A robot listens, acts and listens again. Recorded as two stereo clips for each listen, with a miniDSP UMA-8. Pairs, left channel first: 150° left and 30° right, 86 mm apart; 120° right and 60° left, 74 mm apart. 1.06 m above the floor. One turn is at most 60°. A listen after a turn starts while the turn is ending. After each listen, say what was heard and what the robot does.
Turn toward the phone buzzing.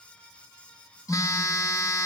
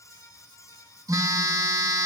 The phone buzzing: 100° left. Turn 60° left.
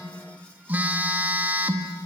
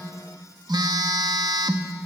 The phone buzzing is now 40° left. Turn 40° left.
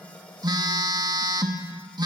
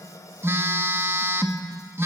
Found it: a phone buzzing, straight ahead.